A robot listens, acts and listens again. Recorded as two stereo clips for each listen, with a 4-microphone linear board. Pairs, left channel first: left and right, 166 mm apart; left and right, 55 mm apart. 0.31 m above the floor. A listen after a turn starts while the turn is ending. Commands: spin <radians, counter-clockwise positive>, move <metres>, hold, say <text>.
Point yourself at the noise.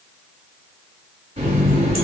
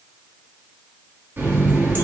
spin -0.61
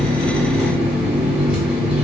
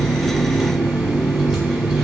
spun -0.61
say Facing the running tap.